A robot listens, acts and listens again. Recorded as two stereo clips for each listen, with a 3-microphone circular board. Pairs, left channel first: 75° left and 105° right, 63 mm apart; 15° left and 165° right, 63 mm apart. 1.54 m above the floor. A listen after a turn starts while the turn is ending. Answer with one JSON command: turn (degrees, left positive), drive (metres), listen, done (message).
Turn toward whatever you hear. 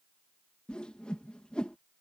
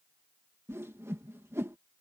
{"turn": 150}
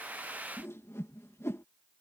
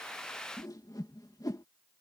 {"turn": 25}
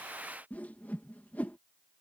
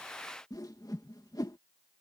{"turn": 10}
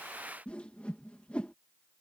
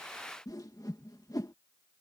{"done": "Facing the whoosh."}